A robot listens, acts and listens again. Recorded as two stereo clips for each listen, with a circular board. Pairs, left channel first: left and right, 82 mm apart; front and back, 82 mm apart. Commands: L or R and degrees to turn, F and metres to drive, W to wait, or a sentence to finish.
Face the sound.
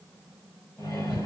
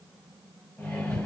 L60
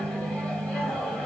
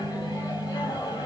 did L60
L15
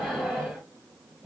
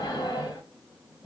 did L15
Facing the microwave, 1 to 2 m away.